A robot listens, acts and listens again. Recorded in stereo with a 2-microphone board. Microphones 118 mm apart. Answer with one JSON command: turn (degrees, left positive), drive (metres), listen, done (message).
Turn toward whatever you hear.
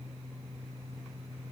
{"listen": true}
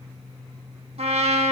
{"turn": -60}
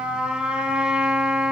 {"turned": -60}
{"turn": -10}
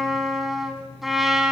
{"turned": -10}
{"done": "Facing the trumpet, 2 to 4 m away."}